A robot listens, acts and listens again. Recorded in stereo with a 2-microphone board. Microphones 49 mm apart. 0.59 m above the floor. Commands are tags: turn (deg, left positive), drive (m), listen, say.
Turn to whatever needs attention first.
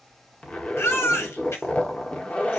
<turn deg="70"/>
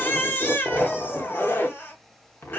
<turn deg="45"/>
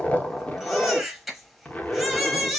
<say>Found it: a baby crying, straight ahead, 1 to 2 m away.</say>